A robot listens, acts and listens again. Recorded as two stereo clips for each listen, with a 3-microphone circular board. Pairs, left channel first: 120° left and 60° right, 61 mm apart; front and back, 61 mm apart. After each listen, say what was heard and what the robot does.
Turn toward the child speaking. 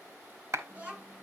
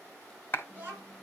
The child speaking: 120° right. Turn 120° right.
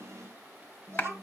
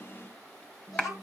The child speaking is now 15° right. Turn 15° right.
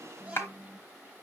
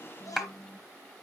Facing the child speaking, 2 to 4 m away.